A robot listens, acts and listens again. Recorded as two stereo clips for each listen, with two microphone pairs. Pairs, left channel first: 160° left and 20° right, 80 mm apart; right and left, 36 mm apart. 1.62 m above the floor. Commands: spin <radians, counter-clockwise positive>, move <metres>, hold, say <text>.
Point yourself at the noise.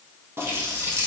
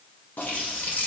spin -1.31
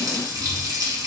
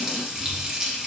spin 0.26
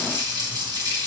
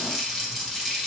say Found it: a running tap, straight ahead.